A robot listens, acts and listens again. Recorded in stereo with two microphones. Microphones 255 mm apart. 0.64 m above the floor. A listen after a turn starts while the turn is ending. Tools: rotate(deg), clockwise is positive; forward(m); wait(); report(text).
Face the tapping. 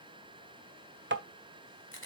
rotate(45)
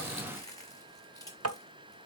rotate(90)
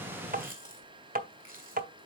rotate(35)
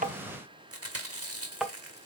report("Found it: tapping, straight ahead.")